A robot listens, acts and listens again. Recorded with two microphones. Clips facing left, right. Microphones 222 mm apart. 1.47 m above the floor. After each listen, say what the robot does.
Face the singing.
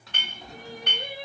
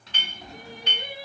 Turn 35° left.
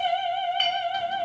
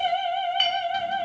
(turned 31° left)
Turn 15° left.
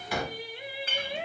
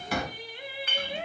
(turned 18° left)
Turn 20° left.
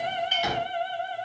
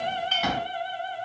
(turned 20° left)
Turn 35° left.
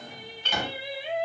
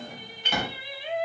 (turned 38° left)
Turn 25° left.
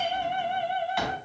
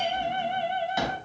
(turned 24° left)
Turn 10° left.
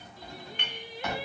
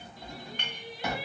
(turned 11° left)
Facing the singing.